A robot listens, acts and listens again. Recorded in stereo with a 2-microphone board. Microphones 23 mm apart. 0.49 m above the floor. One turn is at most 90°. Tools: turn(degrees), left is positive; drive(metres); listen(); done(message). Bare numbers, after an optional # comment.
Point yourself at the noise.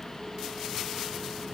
listen()
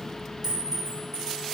# The clink: about 20° right or 160° right.
turn(-20)
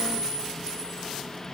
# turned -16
listen()
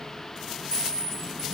# So it is at 145° right.
turn(-90)
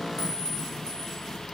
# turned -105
# Nothing new. It was at 40° right.
turn(-40)
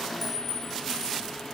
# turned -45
done("Found it: a clink, straight ahead.")